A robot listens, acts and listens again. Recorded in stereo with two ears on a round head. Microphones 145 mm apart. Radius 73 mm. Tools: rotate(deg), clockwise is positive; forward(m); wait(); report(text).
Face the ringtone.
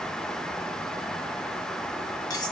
wait()
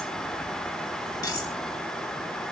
wait()
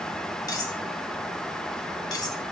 report("I can't make out a ringtone to turn to.")